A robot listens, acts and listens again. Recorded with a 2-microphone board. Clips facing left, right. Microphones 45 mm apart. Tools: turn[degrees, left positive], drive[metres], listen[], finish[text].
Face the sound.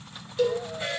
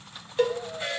Thought: The cowbell: about 35° right or 145° right.
Action: turn[-35]
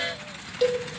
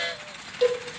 Action: finish[Facing the cowbell, 1 to 2 m away.]